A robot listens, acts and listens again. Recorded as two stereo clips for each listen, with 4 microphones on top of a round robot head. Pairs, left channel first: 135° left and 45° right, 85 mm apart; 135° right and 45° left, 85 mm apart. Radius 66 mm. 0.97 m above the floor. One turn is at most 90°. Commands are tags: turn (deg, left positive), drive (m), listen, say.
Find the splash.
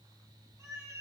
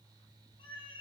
<listen/>
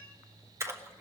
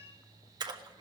<turn deg="10"/>
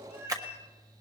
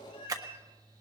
<say>Found it: a splash, straight ahead, 1 to 2 m away.</say>